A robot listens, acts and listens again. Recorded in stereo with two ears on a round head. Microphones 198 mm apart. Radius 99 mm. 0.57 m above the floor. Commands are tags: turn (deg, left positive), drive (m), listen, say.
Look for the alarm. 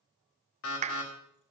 <turn deg="65"/>
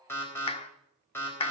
<turn deg="10"/>
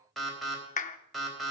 <say>Found it: an alarm, straight ahead, 2 to 4 m away.</say>